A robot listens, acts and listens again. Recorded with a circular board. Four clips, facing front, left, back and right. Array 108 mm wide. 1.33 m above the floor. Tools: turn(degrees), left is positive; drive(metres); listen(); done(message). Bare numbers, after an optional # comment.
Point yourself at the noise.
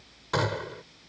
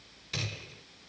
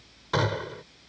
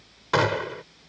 # The gunshot: 100° right.
turn(-100)
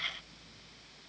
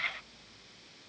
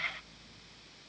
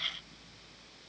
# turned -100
done("Facing where the gunshot came from. I can't hear it now.")